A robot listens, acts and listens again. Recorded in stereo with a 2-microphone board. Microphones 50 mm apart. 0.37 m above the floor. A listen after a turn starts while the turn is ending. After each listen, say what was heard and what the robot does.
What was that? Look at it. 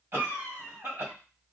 The cough: about 60° right or 120° right. Turn 60° right.
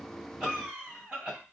So it is at 15° right. Turn 15° right.
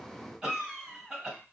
The cough is now 10° right. Turn 10° right.
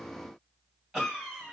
Facing the cough.